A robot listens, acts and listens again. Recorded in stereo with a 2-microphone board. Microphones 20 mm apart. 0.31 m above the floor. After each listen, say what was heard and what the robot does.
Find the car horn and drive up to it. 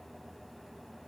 Keep listening.
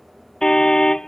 The car horn: about 40° left or 140° left. Turn 40° left.
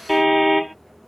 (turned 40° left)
Drive 1.0 m forward.
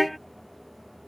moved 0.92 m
Drive 1.0 m forward.
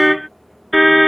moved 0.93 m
Drive 1.0 m forward.
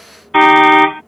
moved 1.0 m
Drive 1.0 m forward.
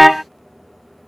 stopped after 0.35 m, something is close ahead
Arrived at the car horn, straight ahead.